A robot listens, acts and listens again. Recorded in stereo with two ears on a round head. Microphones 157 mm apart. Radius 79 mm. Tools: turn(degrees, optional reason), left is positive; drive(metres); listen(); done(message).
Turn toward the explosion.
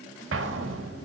turn(degrees=-90)
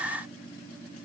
done("Facing where the explosion came from. I can't hear it now.")